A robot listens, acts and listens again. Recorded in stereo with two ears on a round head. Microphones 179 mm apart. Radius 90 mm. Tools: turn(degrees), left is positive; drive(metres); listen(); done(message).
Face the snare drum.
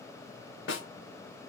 turn(degrees=65)
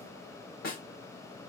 turn(degrees=50)
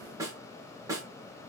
turn(degrees=-15)
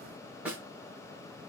done("Found it: a snare drum, straight ahead.")